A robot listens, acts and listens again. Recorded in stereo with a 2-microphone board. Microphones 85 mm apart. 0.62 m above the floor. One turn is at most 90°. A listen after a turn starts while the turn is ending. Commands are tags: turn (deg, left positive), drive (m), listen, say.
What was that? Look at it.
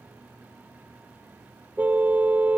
<turn deg="-20"/>
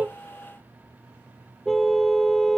<say>Facing the car horn.</say>